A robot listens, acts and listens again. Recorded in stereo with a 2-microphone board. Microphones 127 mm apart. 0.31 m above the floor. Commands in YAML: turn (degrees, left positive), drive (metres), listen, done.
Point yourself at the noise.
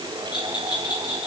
turn: 35
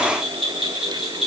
done: "Found it: a bell, straight ahead."